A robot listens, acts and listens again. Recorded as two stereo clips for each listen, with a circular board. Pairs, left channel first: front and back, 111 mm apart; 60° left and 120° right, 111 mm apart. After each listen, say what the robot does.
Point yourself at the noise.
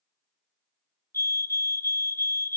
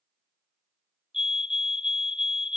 Turn 60° left.
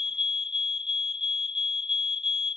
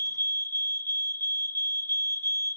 Found it: a fire alarm, straight ahead.